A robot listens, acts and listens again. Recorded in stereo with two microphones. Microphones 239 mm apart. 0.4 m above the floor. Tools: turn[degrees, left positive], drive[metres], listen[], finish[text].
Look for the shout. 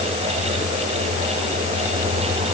Action: listen[]
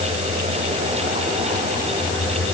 Action: listen[]
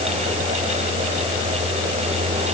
Action: finish[I can't make out a shout.]